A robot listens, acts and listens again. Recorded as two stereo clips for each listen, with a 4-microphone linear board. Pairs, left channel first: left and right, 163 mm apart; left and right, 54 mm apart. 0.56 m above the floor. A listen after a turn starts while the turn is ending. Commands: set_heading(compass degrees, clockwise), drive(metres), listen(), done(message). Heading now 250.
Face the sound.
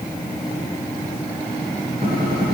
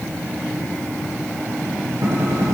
set_heading(310)
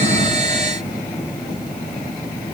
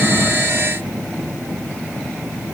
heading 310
listen()
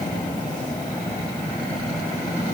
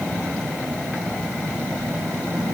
done("I heard a gunshot, but can't make it out now. It was about straight ahead or 60° right.")